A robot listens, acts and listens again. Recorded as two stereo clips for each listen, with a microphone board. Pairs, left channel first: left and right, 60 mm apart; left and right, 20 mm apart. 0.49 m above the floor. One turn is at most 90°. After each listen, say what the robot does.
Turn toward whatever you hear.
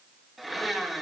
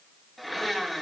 Turn 30° left.
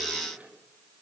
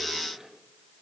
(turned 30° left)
Keep listening.
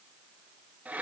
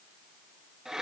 Turn 30° right.
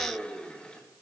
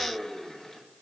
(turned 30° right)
Turn 15° left.
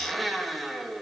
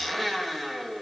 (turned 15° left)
Found it: a blender, straight ahead.